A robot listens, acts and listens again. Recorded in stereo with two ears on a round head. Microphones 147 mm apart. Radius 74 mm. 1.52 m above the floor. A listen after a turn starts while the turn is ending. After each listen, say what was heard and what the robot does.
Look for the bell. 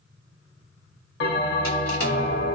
The bell: about 70° left or 110° left. Turn 70° left.
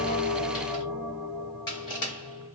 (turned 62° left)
So it is at 20° left. Turn 20° left.
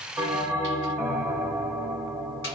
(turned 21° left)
Found it: a bell, straight ahead, under 1 m away.